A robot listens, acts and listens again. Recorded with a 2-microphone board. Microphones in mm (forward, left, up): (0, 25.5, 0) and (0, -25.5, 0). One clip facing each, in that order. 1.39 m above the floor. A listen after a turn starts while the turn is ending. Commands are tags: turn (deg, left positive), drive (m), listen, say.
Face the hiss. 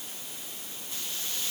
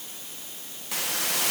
<turn deg="-90"/>
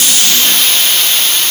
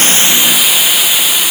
<turn deg="-10"/>
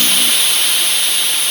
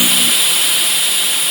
<say>Facing the hiss.</say>